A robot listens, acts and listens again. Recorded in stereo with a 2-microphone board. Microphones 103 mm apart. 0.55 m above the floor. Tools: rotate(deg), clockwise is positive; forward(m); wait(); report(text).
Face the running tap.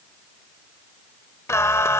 wait()
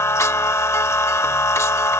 wait()
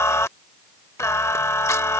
report("I can't make out a running tap to turn to.")